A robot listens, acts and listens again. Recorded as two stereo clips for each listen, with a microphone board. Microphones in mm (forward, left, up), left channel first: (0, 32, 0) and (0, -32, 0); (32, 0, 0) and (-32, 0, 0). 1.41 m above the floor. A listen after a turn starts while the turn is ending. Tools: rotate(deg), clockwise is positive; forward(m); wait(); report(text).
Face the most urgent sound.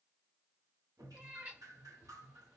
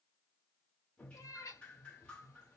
wait()
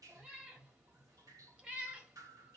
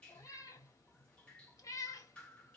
wait()
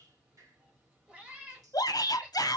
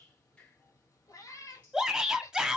rotate(-100)
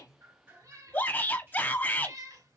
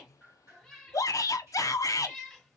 rotate(-30)
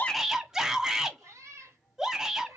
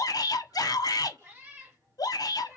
report("Found it: a shout, straight ahead.")